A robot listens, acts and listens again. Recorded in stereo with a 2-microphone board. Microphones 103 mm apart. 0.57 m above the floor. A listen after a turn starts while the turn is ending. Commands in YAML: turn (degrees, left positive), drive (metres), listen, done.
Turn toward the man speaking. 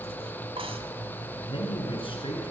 turn: 60
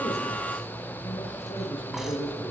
turn: 60
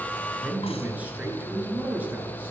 turn: -15
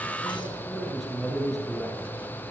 done: "Found it: a man speaking, straight ahead."